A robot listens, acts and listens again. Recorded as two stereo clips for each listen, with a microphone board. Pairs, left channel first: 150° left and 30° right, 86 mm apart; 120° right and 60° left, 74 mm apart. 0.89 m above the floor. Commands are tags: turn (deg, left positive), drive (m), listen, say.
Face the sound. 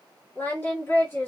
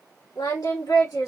<turn deg="-150"/>
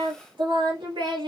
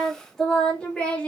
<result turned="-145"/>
<turn deg="-50"/>
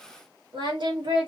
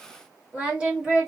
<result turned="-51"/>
<turn deg="-20"/>
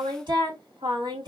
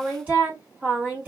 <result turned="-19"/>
<say>Facing the singing, 2 to 4 m away.</say>